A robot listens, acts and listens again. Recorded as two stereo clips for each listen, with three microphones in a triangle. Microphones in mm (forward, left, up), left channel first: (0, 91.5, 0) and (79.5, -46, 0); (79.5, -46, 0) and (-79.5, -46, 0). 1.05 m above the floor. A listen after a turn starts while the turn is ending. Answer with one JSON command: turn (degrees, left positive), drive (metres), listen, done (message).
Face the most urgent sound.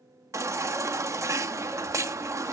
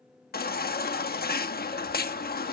{"turn": 10}
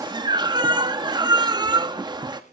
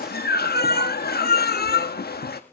{"done": "Facing the baby crying."}